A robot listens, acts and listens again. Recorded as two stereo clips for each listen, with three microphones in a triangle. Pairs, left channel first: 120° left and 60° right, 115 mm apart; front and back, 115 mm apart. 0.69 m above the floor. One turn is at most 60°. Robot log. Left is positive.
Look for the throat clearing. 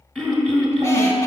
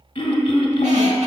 note: The throat clearing: 30° left.
cmd yaw +30
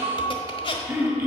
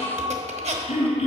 note: The throat clearing is now 10° left.
cmd yaw +10
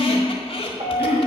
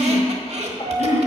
end: Found it: throat clearing, straight ahead.